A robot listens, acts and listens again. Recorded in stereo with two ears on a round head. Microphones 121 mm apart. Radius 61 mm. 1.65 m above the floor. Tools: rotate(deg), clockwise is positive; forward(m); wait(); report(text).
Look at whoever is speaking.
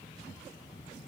wait()
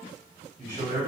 rotate(65)
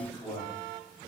report("Found it: a man speaking, straight ahead.")